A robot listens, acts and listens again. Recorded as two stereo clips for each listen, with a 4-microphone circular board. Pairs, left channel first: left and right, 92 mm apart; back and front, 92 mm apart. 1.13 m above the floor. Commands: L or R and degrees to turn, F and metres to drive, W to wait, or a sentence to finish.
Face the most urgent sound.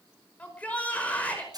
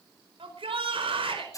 L15
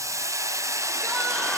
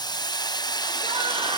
W
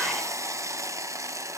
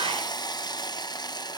W
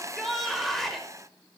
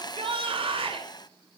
Facing the shout, over 4 m away.